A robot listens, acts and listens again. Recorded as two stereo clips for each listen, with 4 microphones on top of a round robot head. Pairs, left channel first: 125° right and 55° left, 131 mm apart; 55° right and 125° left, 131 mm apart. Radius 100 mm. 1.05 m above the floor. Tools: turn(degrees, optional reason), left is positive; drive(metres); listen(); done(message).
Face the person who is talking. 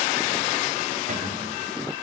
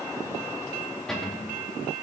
listen()
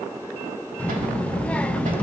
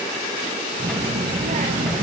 turn(degrees=155, reason="The child speaking: 155° left.")
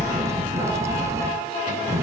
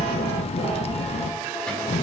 turn(degrees=-15, reason="The child speaking is now 15° right.")
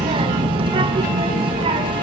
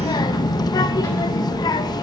done("Found it: a child speaking, straight ahead.")